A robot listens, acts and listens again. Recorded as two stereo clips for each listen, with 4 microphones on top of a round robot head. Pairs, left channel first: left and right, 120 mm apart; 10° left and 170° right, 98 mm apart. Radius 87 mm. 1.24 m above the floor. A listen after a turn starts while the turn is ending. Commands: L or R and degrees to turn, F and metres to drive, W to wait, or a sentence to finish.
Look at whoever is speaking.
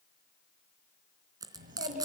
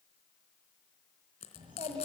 R115
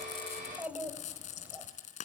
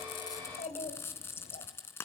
R15
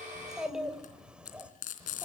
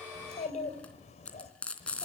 R10
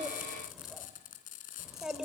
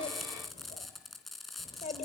Found it: a child speaking, straight ahead, 2 to 4 m away.